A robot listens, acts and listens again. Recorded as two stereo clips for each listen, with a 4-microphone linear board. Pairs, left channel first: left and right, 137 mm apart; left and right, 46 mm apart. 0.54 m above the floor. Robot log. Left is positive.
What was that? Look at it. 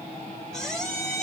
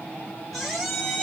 cmd yaw +30
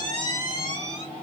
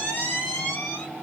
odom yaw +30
note: So it is at 145° left.
cmd yaw +145
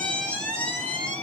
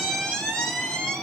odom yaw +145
note: The squeak is now 10° left.
cmd yaw +10
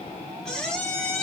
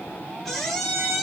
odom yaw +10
end: Found it: a squeak, straight ahead.